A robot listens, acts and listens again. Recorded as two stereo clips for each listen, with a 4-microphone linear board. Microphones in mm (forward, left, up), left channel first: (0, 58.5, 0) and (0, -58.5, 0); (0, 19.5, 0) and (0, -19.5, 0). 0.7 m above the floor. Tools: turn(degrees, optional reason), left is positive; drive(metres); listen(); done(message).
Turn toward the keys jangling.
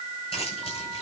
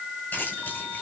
turn(degrees=55, reason="The keys jangling: about 55° left or 125° left.")
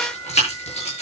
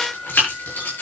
turn(degrees=65, reason="So it is at 65° left.")
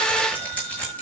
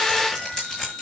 turn(degrees=10, reason="The keys jangling is now 10° left.")
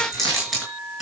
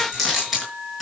done("Facing the keys jangling.")